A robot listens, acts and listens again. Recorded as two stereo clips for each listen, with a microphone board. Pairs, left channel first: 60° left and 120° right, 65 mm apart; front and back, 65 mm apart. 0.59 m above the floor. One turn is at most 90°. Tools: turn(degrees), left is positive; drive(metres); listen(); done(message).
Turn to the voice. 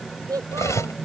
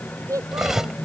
turn(degrees=-90)
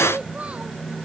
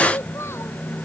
turn(degrees=-50)
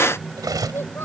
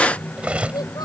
done("Facing the child speaking.")